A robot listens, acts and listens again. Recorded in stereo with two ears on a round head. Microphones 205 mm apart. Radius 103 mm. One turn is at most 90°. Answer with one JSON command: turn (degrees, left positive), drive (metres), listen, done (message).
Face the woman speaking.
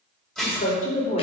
{"turn": 35}
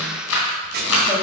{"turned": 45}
{"listen": true}
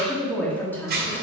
{"turn": 10}
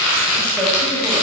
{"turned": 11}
{"listen": true}
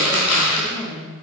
{"turn": 20}
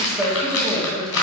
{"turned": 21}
{"done": "Found it: a woman speaking, straight ahead, 2 to 4 m away."}